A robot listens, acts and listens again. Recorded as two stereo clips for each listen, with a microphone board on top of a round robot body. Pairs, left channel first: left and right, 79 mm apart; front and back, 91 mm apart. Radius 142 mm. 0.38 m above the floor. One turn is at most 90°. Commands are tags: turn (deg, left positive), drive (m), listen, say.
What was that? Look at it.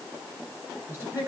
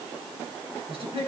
<turn deg="-90"/>
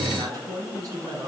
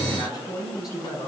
<turn deg="-45"/>
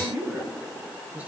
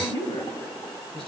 <turn deg="-20"/>
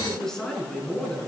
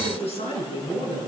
<turn deg="10"/>
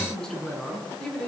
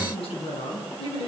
<say>Found it: a man speaking, straight ahead.</say>